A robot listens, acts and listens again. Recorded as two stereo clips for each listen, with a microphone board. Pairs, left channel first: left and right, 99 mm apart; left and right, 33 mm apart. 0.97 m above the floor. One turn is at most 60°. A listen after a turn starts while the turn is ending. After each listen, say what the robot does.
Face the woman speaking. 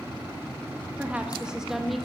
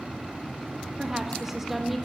Turn 30° left.
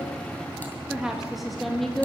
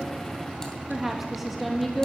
Turn 30° left.
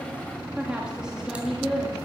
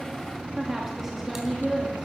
Turn 30° right.
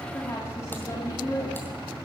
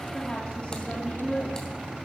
Turn 35° left.
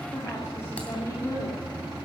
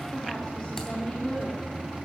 Turn 30° left.
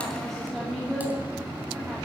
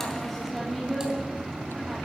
Facing the woman speaking.